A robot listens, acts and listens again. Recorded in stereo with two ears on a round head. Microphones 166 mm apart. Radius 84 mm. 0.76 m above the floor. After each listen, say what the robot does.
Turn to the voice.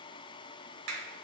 Keep listening.
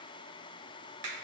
Keep listening.
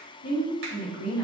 Turn 50° left.
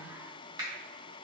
Keep listening.
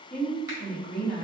Turn 10° left.
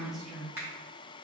Found it: a woman speaking, straight ahead.